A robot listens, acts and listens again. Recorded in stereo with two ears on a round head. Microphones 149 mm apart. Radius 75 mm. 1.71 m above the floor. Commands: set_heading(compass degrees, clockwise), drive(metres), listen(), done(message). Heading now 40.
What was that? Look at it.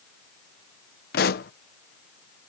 set_heading(340)
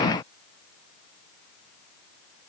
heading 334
listen()
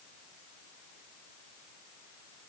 done("I heard a pop, but can't make it out now. It was about 10° right or 55° left.")